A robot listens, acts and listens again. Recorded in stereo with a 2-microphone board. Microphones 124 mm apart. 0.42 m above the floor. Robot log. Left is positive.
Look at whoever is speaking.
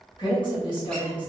note: The woman speaking: about 40° left or 140° left.
cmd yaw +40
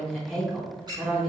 note: So it is at 10° left.
cmd yaw +10
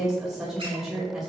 end: Found it: a woman speaking, straight ahead, 1 to 2 m away.